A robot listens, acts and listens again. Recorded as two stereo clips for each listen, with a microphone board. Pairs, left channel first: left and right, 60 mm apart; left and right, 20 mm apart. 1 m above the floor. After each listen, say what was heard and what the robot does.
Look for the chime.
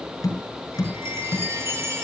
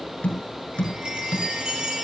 The chime: about 50° right or 130° right. Turn 50° right.
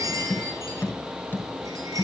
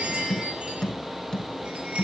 So it is at 80° right. Turn 80° right.
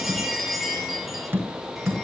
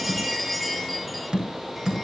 Found it: a chime, straight ahead, over 4 m away.